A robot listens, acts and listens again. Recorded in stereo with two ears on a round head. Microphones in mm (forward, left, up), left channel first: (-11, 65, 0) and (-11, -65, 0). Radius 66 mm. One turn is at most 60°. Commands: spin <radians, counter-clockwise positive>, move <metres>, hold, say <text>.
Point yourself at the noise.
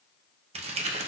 spin -0.87
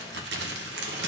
spin -1.05
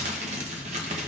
spin -0.79
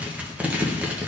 spin -0.17
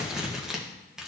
say Facing the crumpling, under 1 m away.